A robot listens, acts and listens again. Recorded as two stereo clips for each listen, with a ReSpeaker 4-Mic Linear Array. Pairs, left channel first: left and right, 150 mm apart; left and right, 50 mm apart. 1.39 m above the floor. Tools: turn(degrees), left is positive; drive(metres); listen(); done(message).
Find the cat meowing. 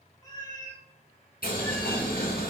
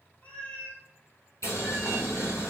turn(degrees=20)
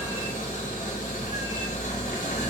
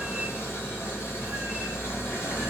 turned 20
listen()
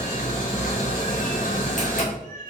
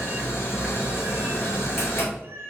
turn(degrees=-55)
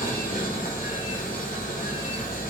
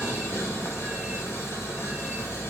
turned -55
listen()
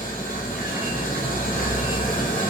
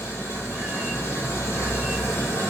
listen()
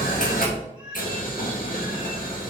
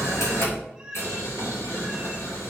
done("Facing the cat meowing, 2 to 4 m away.")